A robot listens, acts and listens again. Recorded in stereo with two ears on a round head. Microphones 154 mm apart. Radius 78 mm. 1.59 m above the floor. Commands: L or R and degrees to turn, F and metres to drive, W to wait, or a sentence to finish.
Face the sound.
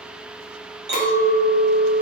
R70
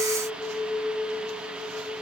R10
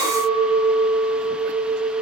Found it: a clink, straight ahead.